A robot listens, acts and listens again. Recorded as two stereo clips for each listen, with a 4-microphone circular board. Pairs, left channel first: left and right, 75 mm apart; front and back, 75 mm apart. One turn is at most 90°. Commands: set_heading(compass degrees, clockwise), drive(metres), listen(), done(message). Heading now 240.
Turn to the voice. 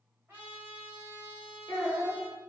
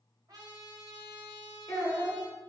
set_heading(185)
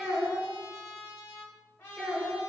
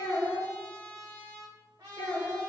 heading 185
done("Found it: a child speaking, straight ahead.")